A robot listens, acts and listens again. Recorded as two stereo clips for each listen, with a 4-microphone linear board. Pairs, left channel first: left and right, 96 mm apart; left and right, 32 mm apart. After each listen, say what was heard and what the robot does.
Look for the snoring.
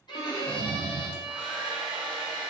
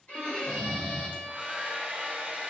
The snoring: about 75° left or 105° left. Turn 75° left.
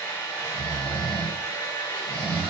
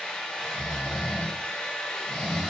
So it is at 15° left. Turn 15° left.
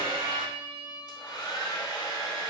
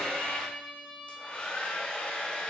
Keep listening.
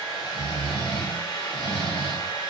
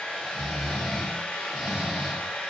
Facing the snoring.